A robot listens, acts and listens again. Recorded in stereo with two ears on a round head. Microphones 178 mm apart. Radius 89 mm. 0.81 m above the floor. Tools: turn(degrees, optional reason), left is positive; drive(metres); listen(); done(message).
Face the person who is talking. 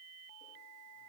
listen()
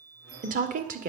turn(degrees=-45, reason="The woman speaking: about 45° right or 135° right.")
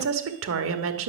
turn(degrees=-90, reason="So it is at 90° right.")
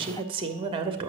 turn(degrees=-25, reason="The woman speaking is now 25° right.")
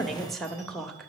done("Facing the woman speaking, 1 to 2 m away.")